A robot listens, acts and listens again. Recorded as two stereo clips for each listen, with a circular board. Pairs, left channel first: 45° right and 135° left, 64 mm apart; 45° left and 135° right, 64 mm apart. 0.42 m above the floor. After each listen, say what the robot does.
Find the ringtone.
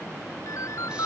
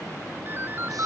Turn 80° right.
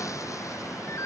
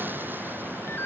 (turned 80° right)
Turn 10° right.
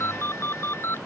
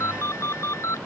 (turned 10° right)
Facing the ringtone.